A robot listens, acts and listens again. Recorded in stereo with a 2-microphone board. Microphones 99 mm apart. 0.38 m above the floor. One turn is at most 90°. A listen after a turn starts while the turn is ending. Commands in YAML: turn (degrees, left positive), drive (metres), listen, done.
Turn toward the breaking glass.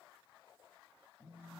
listen: true
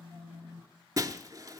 turn: -35
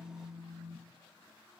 listen: true
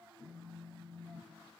done: "I heard breaking glass, but can't make it out now. It was about straight ahead or 110° right."